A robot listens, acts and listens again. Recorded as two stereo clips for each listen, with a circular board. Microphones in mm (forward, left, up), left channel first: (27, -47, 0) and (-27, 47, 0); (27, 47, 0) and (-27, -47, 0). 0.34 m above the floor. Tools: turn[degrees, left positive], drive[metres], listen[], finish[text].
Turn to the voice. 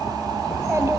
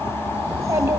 Thought: The child speaking: 175° right.
Action: turn[-175]
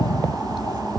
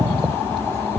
Action: listen[]
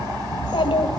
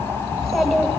Thought: The child speaking is now 25° right.
Action: turn[-25]
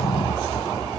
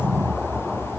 Action: listen[]
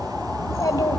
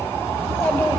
Thought: The child speaking is now 10° right.
Action: turn[-10]
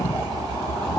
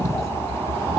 Action: listen[]
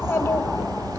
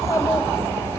Action: finish[Facing the child speaking.]